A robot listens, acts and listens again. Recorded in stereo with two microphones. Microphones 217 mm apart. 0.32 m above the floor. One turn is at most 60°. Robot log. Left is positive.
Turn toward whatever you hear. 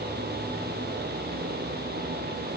cmd idle
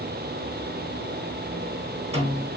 note: The snare drum: about 30° right or 150° right.
cmd yaw -30
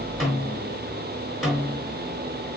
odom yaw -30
end: Found it: a snare drum, straight ahead, over 4 m away.